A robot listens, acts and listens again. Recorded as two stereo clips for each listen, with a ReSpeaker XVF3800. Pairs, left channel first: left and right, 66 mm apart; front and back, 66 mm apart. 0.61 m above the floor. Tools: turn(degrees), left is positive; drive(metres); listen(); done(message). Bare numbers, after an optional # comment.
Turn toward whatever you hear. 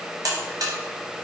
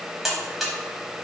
# The buzzer: 95° right.
turn(-95)
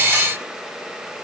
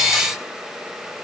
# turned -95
listen()
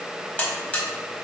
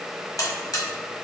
# The buzzer is now 25° left.
turn(25)
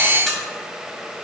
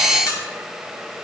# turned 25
listen()
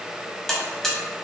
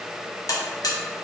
# The buzzer is now 10° left.
turn(10)
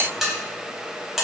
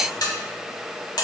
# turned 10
done("Facing the buzzer.")